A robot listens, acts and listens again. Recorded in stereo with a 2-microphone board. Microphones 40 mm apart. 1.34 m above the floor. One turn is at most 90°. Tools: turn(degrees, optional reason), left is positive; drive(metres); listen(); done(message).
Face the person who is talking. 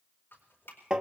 listen()
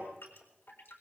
listen()
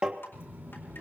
turn(degrees=-65, reason="The child speaking: about 65° right or 115° right.")
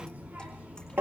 turn(degrees=-50, reason="So it is at 50° right.")
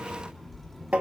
done("Facing the child speaking, 2 to 4 m away.")